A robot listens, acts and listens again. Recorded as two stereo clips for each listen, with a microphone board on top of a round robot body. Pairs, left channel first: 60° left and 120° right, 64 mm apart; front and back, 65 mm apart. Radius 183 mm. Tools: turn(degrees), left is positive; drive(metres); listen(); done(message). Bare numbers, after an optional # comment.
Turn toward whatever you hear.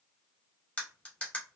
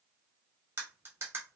# The cutlery clinking: 130° left.
turn(130)
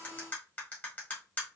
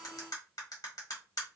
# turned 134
done("Found it: cutlery clinking, straight ahead.")